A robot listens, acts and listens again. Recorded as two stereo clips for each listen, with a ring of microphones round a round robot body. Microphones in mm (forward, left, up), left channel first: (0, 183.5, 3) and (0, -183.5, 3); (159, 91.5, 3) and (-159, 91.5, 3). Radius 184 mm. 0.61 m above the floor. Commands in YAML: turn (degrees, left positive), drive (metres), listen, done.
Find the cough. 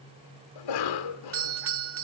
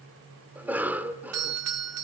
turn: 95
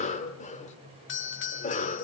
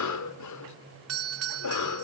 turn: 20
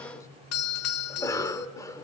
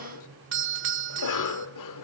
turn: 10
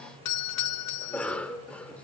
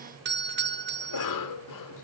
done: "Found it: a cough, straight ahead."